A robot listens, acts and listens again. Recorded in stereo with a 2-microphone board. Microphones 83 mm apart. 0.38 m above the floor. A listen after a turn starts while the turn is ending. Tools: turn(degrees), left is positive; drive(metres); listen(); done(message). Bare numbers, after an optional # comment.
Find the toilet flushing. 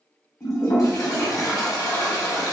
# The toilet flushing: about 50° left or 130° left.
turn(50)
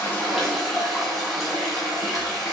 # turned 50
done("Facing the toilet flushing, 1 to 2 m away.")